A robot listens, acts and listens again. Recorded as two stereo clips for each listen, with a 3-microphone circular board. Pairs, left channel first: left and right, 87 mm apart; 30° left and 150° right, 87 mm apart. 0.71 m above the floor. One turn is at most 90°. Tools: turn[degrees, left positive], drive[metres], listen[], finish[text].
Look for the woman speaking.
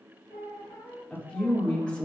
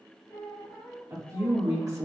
Thought: The woman speaking: 165° left.
Action: turn[90]
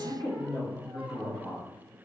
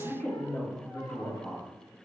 Thought: The woman speaking is now 90° left.
Action: turn[90]
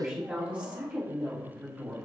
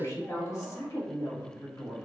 Thought: The woman speaking is now 20° right.
Action: turn[-20]
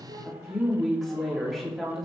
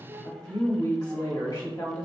Action: finish[Facing the woman speaking.]